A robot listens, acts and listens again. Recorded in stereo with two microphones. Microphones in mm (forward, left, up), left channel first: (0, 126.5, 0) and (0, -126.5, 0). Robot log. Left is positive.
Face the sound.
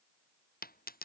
note: The dropped coin: about 35° left or 145° left.
cmd yaw +35
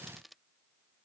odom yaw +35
end: Found it: a dropped coin, straight ahead.